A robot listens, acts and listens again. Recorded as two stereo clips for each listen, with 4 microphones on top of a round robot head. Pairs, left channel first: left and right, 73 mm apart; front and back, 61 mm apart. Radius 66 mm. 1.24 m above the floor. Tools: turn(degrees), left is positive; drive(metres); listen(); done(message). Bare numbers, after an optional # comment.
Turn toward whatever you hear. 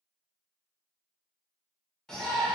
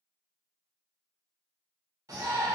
# The shout: 170° left.
turn(170)
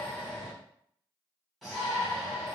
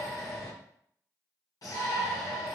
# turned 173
done("Found it: a shout, straight ahead, 1 to 2 m away.")